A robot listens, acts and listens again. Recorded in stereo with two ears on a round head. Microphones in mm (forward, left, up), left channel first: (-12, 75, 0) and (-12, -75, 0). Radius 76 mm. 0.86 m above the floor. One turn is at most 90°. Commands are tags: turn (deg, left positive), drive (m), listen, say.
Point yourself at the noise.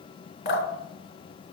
<turn deg="60"/>
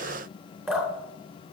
<say>Facing the dripping, 2 to 4 m away.</say>